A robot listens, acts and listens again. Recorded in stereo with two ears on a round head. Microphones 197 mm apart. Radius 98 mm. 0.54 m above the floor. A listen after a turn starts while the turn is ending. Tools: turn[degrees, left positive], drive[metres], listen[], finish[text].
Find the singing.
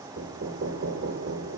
Action: listen[]
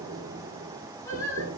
Action: turn[30]
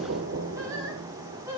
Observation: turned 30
Thought: So it is at 15° right.
Action: turn[-15]
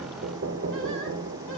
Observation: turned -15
Action: listen[]
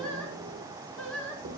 Action: finish[Found it: singing, straight ahead.]